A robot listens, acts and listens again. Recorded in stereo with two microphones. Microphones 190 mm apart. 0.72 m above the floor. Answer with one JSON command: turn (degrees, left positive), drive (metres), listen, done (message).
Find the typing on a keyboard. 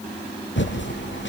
{"turn": 75}
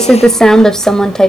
{"done": "Found it: typing on a keyboard, straight ahead."}